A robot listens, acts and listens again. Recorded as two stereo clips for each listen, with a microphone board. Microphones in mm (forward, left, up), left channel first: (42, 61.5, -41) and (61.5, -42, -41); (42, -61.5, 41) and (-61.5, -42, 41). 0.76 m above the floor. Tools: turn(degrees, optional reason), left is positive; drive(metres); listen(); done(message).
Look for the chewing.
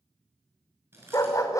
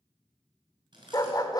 turn(degrees=-145, reason="The chewing: 145° right.")
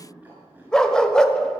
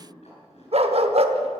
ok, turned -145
done("Facing the chewing.")